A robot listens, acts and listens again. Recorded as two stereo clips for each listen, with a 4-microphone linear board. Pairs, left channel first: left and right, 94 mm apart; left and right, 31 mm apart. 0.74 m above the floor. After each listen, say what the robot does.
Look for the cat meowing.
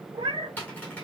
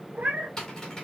Turn 70° right.
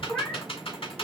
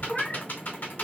Turn 15° left.
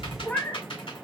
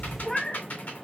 Turn 25° left.
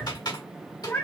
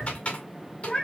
Turn 25° left.
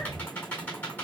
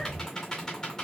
Keep listening.
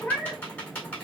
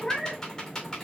Turn 15° left.
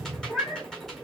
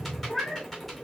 Found it: a cat meowing, straight ahead, 1 to 2 m away.